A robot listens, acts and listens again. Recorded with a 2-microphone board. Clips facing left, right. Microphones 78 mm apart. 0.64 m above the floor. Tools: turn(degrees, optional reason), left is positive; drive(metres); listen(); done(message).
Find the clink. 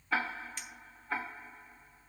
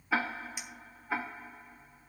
turn(degrees=-30)
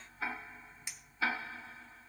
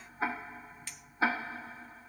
turn(degrees=20, reason="So it is at 20° left.")
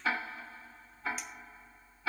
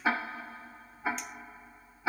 listen()
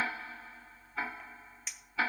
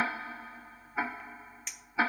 done("Found it: a clink, straight ahead.")